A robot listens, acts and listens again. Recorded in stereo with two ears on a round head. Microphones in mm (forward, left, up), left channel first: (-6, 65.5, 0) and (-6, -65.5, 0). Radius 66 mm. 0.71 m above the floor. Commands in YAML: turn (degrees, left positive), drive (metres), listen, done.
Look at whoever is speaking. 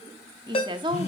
turn: -30
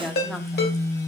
listen: true
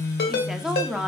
done: "Facing the woman speaking, 1 to 2 m away."